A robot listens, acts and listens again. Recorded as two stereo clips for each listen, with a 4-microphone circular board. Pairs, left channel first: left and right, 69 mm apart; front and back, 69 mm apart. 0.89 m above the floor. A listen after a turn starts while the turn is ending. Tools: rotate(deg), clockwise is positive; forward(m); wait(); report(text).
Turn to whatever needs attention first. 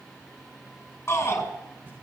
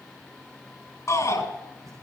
rotate(-40)
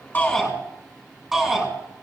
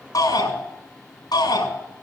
report("Found it: a shout, straight ahead, over 4 m away.")